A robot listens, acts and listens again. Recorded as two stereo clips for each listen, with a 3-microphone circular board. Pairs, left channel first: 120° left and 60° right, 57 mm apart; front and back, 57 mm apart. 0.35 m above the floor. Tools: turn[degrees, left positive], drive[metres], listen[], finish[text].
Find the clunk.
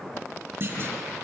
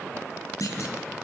Thought: The clunk: 15° right.
Action: turn[-15]
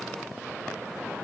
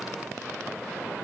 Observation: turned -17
Action: finish[I heard a clunk from this way, but can't make it out now.]